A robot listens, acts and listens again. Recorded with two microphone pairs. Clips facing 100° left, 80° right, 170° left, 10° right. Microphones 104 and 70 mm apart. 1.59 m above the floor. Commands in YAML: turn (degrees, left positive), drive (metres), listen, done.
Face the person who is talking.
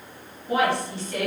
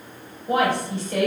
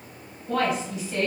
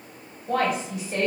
turn: -45
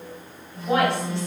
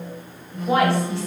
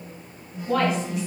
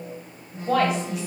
done: "Facing the woman speaking, 1 to 2 m away."